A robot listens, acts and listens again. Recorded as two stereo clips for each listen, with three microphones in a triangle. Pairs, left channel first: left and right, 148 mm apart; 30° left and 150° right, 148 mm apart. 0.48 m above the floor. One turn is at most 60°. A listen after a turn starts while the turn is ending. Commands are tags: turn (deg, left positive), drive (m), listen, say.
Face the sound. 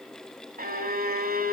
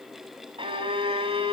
<turn deg="-60"/>
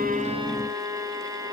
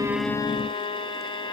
<turn deg="-25"/>
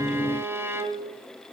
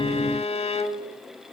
<turn deg="-15"/>
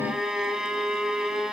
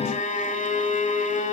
<say>Facing the violin, 1 to 2 m away.</say>